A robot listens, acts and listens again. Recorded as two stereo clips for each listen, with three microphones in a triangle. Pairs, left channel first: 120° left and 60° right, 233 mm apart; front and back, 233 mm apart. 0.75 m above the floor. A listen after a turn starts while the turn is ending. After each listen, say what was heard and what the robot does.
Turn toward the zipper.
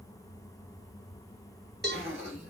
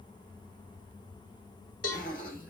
The zipper: 50° right. Turn 50° right.
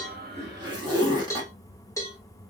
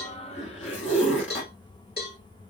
The zipper is now 10° left. Turn 10° left.
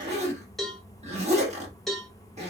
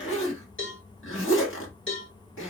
Found it: a zipper, straight ahead.